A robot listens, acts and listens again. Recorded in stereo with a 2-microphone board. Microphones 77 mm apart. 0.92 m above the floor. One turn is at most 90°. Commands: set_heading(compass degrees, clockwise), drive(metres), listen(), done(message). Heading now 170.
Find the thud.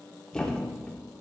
set_heading(140)
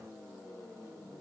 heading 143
listen()
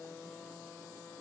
done("I heard a thud, but can't make it out now. It was about 20° right or 145° left.")